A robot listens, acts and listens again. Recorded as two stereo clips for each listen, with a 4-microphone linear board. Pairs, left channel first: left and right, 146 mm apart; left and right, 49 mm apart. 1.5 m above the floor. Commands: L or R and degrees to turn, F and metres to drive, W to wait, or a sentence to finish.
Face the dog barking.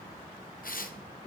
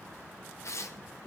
W
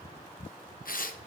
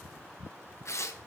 W
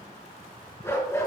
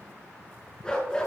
L20
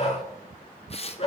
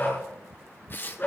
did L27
L135
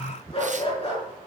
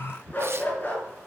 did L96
L40
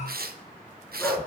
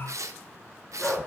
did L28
L15
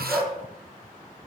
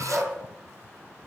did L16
Facing the dog barking, over 4 m away.